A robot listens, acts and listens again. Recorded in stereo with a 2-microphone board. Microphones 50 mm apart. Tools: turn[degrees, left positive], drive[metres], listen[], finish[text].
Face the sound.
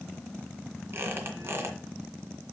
Thought: The squeak: about 50° right or 130° right.
Action: turn[-50]
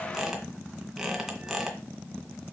Thought: So it is at 10° right.
Action: turn[-10]
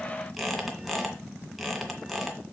Action: finish[Found it: a squeak, straight ahead, 2 to 4 m away.]